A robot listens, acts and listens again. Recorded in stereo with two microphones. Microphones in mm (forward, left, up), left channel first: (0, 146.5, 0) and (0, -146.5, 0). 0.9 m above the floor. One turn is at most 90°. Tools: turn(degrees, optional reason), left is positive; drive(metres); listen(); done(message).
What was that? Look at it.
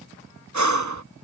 turn(degrees=-70, reason="The breathing: about 70° right or 110° right.")
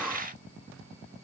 listen()
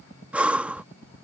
done("Facing the breathing.")